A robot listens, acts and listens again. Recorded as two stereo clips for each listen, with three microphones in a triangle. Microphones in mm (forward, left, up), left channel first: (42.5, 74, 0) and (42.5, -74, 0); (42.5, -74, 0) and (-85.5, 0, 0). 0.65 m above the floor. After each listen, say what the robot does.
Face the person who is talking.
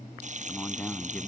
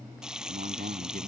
Turn 170° left.
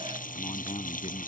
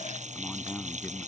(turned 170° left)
Turn 45° left.
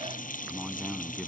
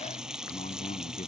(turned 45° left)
Found it: a man speaking, straight ahead.